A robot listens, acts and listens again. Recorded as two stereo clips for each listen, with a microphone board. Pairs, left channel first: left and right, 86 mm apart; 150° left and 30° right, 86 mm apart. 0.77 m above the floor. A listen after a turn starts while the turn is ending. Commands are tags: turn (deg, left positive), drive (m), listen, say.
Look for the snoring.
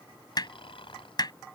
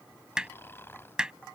<turn deg="85"/>
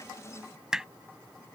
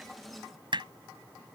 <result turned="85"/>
<listen/>
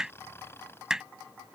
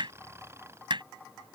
<turn deg="30"/>
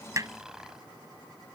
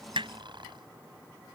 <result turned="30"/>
<say>Found it: snoring, straight ahead.</say>